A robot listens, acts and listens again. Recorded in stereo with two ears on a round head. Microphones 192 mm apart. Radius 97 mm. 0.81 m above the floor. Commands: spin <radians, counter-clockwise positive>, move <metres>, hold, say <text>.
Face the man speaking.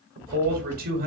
spin -0.79
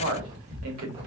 spin -1.48
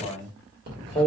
spin 0.17
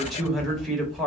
say Found it: a man speaking, straight ahead, 1 to 2 m away.